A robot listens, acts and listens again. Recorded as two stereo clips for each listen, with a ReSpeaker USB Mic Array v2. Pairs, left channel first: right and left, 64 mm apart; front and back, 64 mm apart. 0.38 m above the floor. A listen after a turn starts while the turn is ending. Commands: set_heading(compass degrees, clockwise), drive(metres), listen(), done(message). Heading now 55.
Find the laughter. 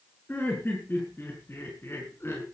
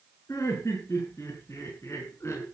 set_heading(100)
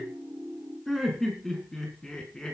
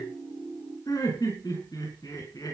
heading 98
set_heading(108)
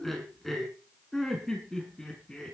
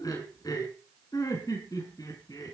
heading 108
set_heading(118)
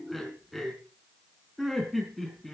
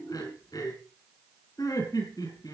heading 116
done("Found it: laughter, straight ahead, over 4 m away.")